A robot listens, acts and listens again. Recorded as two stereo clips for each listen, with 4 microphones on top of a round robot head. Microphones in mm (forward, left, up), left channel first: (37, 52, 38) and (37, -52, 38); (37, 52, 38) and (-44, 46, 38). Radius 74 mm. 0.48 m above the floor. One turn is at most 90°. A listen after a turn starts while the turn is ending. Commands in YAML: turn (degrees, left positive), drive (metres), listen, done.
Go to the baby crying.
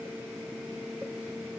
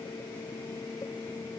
listen: true
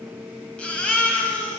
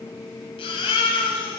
turn: 10
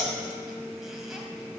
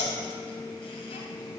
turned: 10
listen: true
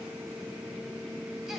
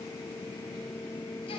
listen: true
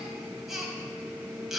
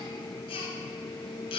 drive: 1.0
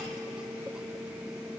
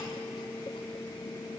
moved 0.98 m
listen: true
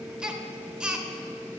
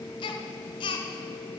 turn: -10
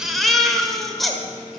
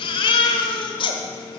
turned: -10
drive: 1.0
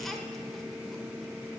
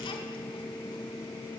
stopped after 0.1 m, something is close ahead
listen: true
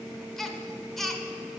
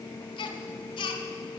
done: "I am next to the baby crying."